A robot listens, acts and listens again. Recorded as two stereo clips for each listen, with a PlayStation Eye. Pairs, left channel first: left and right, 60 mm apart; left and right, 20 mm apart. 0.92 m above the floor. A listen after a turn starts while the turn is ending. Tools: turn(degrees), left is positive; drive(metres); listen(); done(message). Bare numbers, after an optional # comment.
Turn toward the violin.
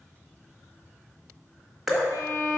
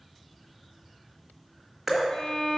# The violin: about 65° left or 115° left.
turn(65)
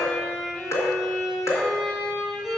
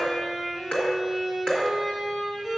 done("Found it: a violin, straight ahead.")